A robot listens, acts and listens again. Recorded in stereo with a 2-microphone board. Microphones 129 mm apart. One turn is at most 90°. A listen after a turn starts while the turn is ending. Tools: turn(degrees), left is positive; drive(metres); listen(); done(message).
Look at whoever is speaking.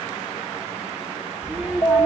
turn(degrees=-30)
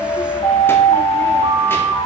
listen()
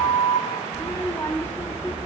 turn(degrees=15)
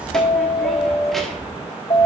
listen()
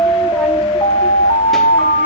listen()
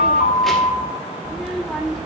done("Facing the child speaking, 1 to 2 m away.")